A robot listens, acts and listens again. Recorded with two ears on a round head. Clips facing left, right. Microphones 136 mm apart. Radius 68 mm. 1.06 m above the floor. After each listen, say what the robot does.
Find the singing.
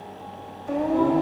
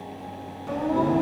Turn 70° right.
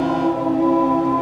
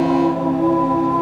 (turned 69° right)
Found it: singing, straight ahead.